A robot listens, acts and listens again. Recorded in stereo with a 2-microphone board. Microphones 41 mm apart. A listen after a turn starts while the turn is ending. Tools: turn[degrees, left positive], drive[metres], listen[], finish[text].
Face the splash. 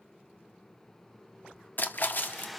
Thought: The splash: about 50° left or 130° left.
Action: turn[50]
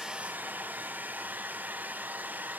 Action: listen[]
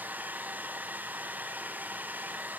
Action: finish[I heard a splash, but can't make it out now. It was about straight ahead or 80° left.]